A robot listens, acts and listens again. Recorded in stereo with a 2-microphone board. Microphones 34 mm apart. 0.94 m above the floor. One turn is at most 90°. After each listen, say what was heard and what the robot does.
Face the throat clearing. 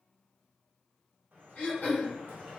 The throat clearing: about 45° left or 135° left. Turn 45° left.
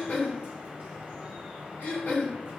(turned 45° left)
So it is at 85° left. Turn 85° left.
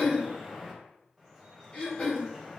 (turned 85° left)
The throat clearing is now 40° left. Turn 40° left.
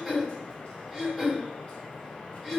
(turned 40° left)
Found it: throat clearing, straight ahead, 1 to 2 m away.